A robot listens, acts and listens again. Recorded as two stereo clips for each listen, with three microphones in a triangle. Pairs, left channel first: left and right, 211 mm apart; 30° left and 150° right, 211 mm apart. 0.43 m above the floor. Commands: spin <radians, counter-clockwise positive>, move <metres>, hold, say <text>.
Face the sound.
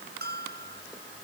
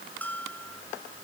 spin -0.96
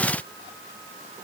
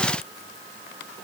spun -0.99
hold
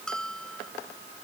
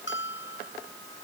say Found it: a bell, straight ahead.